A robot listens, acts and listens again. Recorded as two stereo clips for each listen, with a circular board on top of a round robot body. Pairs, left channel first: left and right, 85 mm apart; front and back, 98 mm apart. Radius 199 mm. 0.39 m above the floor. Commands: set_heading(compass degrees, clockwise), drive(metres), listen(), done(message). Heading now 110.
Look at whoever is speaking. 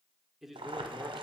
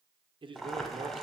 set_heading(285)
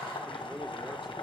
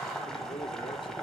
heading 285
listen()
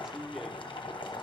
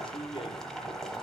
done("Facing the man speaking, 1 to 2 m away.")